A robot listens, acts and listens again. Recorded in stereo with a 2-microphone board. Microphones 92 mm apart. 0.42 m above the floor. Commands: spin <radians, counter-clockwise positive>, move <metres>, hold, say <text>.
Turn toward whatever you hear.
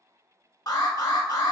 spin 0.79
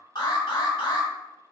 spin 1.40
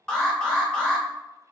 spin 0.17
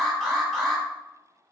say Facing the alarm.